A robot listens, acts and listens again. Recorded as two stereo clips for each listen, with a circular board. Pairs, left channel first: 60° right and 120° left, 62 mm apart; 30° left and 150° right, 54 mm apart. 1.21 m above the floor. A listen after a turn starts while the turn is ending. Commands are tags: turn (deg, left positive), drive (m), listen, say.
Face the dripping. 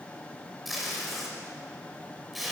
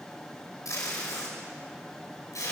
<listen/>
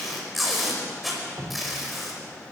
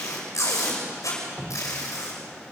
<turn deg="130"/>
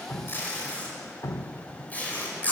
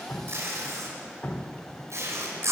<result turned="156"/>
<turn deg="-25"/>
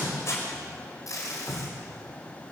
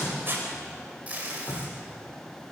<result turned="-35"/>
<turn deg="10"/>
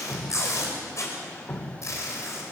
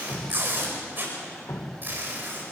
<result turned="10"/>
<say>Facing the dripping, 1 to 2 m away.</say>